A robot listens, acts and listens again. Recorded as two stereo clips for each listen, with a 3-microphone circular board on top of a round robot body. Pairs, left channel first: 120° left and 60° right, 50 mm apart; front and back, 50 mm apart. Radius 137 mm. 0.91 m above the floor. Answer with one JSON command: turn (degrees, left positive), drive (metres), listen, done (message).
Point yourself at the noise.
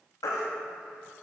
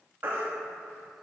{"turn": 125}
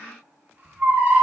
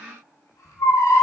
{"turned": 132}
{"done": "Found it: a baby crying, straight ahead, under 1 m away."}